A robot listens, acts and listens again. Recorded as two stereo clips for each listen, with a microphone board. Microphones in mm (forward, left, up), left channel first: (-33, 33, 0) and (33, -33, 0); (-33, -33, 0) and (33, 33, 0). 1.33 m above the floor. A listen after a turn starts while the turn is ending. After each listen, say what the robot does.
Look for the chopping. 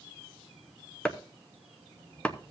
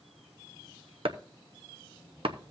Turn 60° left.
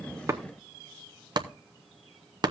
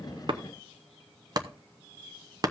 Found it: chopping, straight ahead.